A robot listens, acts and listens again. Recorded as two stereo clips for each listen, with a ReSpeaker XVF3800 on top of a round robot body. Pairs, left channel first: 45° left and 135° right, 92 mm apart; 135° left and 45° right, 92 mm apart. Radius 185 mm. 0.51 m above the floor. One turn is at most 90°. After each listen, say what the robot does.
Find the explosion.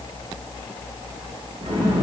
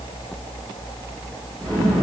Turn 90° right.
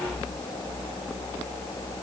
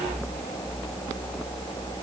Turn 55° right.
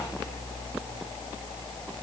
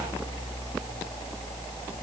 I heard an explosion from this way, but can't make it out now.